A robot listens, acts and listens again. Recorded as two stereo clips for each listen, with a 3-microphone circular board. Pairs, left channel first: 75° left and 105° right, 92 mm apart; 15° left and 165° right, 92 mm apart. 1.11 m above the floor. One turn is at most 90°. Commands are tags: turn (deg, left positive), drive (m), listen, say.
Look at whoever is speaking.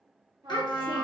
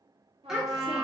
<turn deg="90"/>
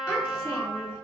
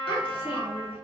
<turn deg="15"/>
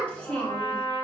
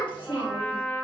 <say>Found it: a child speaking, straight ahead, 1 to 2 m away.</say>